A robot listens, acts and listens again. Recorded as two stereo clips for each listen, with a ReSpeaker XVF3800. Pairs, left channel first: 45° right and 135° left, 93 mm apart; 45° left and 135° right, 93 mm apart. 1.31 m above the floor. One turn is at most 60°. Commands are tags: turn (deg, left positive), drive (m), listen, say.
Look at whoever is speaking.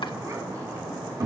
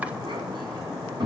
<turn deg="-60"/>
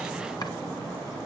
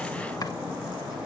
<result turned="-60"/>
<turn deg="-60"/>
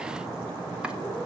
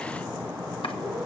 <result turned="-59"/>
<turn deg="-45"/>
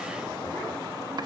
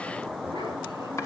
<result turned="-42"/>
<say>Facing where the child speaking came from. I can't hear it now.</say>